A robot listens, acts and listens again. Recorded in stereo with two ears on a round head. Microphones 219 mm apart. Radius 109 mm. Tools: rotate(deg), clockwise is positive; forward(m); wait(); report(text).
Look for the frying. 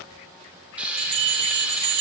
rotate(30)
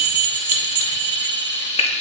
rotate(-25)
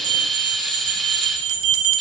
report("Found it: frying, straight ahead.")